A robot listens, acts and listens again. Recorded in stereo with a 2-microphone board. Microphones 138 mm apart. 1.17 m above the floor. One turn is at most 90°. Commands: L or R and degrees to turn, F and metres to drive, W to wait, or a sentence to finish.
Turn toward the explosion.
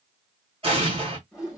R45
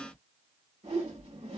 W
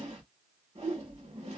I heard an explosion, but can't make it out now. It was about straight ahead or 90° right.